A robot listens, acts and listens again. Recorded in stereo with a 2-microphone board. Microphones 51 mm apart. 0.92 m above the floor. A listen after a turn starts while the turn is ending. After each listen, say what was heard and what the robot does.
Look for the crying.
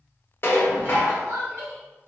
The crying: about 60° right or 120° right. Turn 60° right.
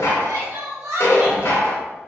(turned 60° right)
So it is at 60° right. Turn 60° right.
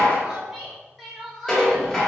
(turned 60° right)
Found it: crying, straight ahead.